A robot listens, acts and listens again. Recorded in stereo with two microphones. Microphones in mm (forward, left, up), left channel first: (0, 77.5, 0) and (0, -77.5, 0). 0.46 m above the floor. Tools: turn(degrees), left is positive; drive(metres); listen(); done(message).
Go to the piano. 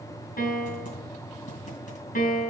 turn(degrees=75)
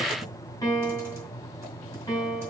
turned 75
turn(degrees=20)
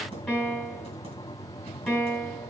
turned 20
drive(metres=1.0)
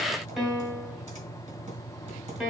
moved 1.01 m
drive(metres=1.0)
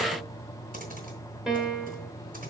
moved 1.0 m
drive(metres=1.0)
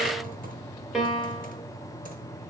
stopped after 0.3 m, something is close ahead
done("Arrived at the piano, straight ahead.")